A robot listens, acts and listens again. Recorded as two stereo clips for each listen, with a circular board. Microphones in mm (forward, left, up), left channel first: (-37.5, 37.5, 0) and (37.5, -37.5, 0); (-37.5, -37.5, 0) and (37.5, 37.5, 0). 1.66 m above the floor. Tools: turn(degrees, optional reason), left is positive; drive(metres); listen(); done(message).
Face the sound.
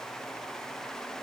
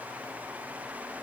listen()
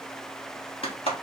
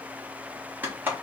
turn(degrees=115, reason="The clap: 115° left.")
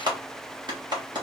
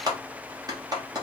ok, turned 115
done("Facing the clap, 1 to 2 m away.")